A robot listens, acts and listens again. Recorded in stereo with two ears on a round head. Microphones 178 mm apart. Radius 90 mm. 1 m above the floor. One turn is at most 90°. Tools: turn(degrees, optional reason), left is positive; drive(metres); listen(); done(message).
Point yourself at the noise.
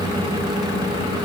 listen()
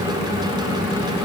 listen()
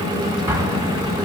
turn(degrees=-20, reason="The explosion: about 20° right or 160° right.")
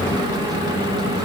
listen()
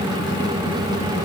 done("I heard an explosion, but can't make it out now. It was about straight ahead or 140° right.")